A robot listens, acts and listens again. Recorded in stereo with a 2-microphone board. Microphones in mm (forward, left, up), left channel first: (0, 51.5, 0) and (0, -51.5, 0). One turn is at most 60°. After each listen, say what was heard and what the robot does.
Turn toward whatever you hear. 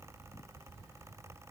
Keep listening.
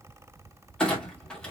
Turn 30° left.
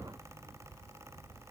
Keep listening.
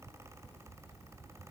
I heard a clunk, but can't make it out now. It was about 20° right or 140° left.